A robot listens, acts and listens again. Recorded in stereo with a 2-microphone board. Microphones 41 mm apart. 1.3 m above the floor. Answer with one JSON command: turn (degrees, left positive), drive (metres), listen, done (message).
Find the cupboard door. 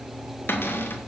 {"turn": 75}
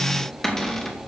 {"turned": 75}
{"turn": 10}
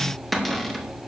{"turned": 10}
{"done": "Facing the cupboard door, 2 to 4 m away."}